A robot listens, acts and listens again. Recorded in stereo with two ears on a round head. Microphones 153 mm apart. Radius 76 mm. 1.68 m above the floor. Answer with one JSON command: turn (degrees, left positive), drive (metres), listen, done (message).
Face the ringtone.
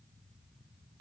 {"listen": true}
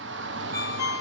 {"turn": 15}
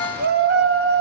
{"done": "Facing the ringtone, 2 to 4 m away."}